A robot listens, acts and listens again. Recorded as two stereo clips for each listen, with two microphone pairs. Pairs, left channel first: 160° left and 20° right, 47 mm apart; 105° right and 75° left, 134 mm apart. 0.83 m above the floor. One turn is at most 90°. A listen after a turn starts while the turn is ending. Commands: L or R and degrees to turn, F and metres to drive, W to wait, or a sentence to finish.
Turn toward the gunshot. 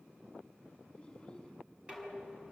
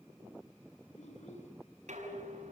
W
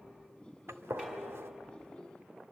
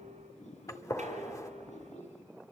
R40
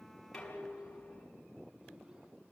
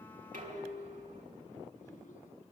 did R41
I heard a gunshot from this way, but can't make it out now.